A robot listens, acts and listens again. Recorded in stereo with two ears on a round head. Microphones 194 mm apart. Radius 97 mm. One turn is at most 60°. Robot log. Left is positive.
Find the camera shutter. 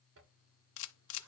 note: The camera shutter: about 65° left or 115° left.
cmd yaw +60
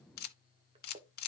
note: So it is at 50° left.
cmd yaw +50
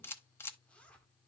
note: The camera shutter is now 10° left.
cmd yaw +10
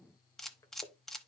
end: Found it: a camera shutter, straight ahead, under 1 m away.